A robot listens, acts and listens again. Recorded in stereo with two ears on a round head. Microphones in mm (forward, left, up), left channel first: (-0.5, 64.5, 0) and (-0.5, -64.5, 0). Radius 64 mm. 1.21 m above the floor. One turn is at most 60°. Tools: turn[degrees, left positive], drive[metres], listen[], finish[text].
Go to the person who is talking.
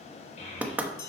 Thought: The child speaking: about 55° left or 125° left.
Action: turn[55]
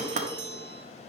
Action: listen[]
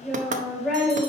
Action: drive[1.0]
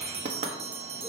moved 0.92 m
Action: listen[]
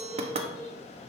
Action: drive[1.0]
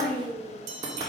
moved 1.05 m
Thought: The child speaking is now 10° left.
Action: turn[10]
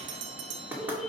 Action: drive[1.0]
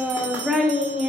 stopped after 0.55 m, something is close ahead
Action: finish[I am next to the child speaking.]